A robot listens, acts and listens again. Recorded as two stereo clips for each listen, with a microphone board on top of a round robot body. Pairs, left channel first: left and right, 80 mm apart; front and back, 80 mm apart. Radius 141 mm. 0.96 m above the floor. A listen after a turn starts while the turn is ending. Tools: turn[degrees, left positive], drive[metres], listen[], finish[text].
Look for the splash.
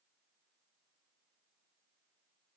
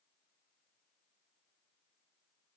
Action: listen[]
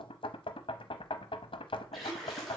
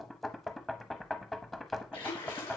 Action: finish[Facing the splash.]